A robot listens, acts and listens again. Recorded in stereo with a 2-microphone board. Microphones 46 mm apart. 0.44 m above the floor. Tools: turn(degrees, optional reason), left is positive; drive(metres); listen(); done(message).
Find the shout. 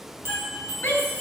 turn(degrees=60, reason="The shout: about 60° left or 120° left.")
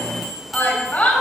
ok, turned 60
turn(degrees=45, reason="So it is at 45° left.")
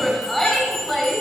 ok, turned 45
done("Facing the shout.")